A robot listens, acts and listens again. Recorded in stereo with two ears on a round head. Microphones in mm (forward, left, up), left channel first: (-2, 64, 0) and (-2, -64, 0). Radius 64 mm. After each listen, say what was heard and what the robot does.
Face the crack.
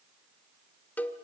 Keep listening.
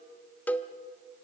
Keep listening.
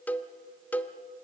I can't make out a crack to turn to.